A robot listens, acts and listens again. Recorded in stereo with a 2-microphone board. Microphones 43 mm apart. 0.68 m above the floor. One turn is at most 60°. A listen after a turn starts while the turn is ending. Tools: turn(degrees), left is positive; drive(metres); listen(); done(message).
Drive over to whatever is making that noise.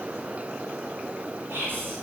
turn(degrees=-60)
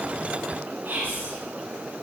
turn(degrees=-55)
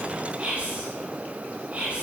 turn(degrees=-30)
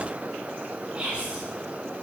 turn(degrees=-25)
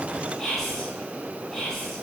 turn(degrees=10)
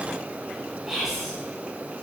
drive(metres=1.0)
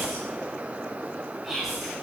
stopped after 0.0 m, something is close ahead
done("Something is in my way. I am facing the whispering but have not reached it.")